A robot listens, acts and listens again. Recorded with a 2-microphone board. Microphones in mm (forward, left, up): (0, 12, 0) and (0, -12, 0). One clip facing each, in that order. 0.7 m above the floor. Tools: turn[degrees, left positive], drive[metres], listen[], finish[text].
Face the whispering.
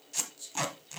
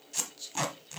Thought: The whispering: about 35° right or 145° right.
Action: turn[-35]
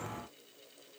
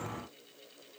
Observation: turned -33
Action: listen[]
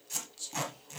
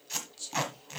Thought: So it is at 10° right.
Action: turn[-10]
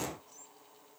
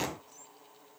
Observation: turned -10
Action: listen[]
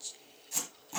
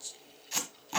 Action: finish[Found it: whispering, straight ahead, under 1 m away.]